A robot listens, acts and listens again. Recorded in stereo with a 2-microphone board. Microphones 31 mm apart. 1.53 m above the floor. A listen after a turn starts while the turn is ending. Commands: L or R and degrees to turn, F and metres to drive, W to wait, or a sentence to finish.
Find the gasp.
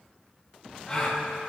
L20
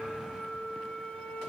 W
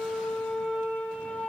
I heard a gasp, but can't make it out now. It was about straight ahead or 140° left.